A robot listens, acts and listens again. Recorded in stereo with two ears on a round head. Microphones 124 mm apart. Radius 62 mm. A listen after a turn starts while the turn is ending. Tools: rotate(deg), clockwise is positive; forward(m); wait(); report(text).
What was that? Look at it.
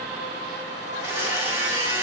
rotate(25)
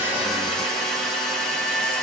report("Found it: a blender, straight ahead, 2 to 4 m away.")